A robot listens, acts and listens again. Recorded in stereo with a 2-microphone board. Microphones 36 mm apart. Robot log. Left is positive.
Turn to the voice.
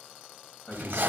note: The man speaking: about 55° left or 125° left.
cmd yaw +55
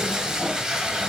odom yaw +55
cmd idle
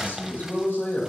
note: So it is at 65° left.
cmd yaw +65
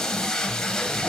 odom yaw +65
cmd idle
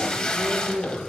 note: The man speaking is now 25° left.
cmd yaw +25
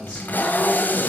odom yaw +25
note: The man speaking is now 20° right.
cmd yaw -20
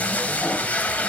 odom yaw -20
cmd idle
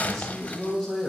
end: Found it: a man speaking, straight ahead, 2 to 4 m away.